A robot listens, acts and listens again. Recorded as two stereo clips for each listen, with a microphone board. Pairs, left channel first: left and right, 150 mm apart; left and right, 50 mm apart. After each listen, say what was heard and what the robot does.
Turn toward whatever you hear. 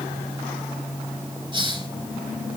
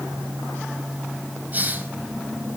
The hiss: about 30° right or 150° right. Turn 30° right.
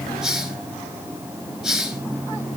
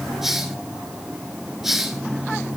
Found it: a hiss, straight ahead, 2 to 4 m away.